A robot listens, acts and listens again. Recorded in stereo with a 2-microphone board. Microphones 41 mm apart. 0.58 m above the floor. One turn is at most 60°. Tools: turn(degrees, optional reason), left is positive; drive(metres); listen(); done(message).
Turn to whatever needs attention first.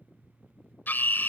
turn(degrees=55, reason="The scream: about 55° left or 125° left.")
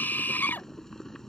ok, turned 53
turn(degrees=60, reason="So it is at 65° left.")
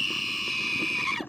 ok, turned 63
done("Facing the scream.")